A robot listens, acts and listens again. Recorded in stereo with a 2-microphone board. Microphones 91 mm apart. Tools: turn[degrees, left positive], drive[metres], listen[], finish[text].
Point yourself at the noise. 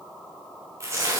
Thought: The tearing paper: about 30° right or 150° right.
Action: turn[-30]
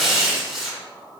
Action: finish[Found it: tearing paper, straight ahead.]